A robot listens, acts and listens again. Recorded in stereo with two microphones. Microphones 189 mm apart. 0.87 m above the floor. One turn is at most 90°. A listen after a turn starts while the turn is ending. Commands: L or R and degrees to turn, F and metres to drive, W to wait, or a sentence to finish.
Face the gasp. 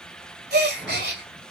R70
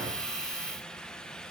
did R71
W
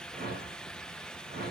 I heard a gasp, but can't make it out now. It was about 5° left or 40° right.